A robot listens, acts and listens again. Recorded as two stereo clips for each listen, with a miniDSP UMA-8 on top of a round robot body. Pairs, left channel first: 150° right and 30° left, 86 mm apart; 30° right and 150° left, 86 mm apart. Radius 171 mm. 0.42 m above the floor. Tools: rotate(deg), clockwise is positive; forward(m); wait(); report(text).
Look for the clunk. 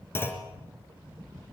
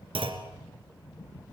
rotate(-145)
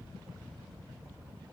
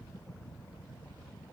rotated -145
report("I heard a clunk from this way, but can't make it out now.")